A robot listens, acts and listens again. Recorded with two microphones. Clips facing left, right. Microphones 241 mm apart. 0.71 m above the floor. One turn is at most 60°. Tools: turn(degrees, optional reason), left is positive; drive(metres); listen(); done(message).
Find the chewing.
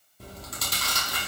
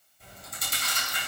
turn(degrees=60)
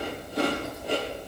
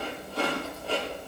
turn(degrees=15, reason="So it is at 15° left.")
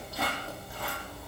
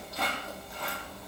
done("Facing the chewing.")